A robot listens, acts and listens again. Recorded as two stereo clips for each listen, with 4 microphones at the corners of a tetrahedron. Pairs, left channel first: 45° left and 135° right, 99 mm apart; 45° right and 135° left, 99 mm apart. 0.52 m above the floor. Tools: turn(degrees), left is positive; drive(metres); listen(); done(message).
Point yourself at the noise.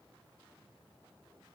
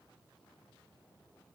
listen()
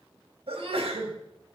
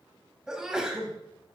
turn(degrees=-145)
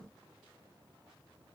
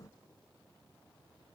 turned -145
done("Facing where the sneeze came from. I can't hear it now.")